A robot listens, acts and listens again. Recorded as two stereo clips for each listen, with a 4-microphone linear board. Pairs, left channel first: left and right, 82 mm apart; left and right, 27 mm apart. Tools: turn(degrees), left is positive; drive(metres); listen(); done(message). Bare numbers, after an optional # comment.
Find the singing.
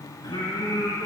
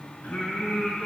# The singing: about 65° left or 115° left.
turn(65)
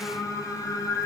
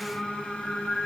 # So it is at 50° left.
turn(50)
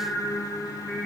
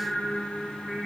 done("Facing the singing.")